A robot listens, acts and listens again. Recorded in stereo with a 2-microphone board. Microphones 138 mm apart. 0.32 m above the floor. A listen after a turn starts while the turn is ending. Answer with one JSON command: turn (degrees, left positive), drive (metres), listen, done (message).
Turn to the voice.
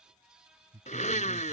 {"turn": -25}
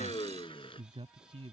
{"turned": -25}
{"turn": -130}
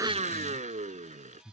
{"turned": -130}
{"turn": 25}
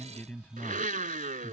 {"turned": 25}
{"turn": 10}
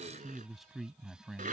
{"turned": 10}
{"done": "Found it: a man speaking, straight ahead."}